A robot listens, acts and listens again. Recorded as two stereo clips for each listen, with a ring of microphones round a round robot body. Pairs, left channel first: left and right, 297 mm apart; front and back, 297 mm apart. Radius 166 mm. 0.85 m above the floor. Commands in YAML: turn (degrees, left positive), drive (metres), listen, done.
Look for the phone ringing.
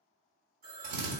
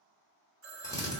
turn: -155
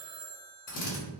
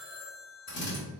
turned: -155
turn: -20
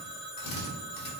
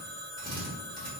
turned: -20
done: "Facing the phone ringing, 1 to 2 m away."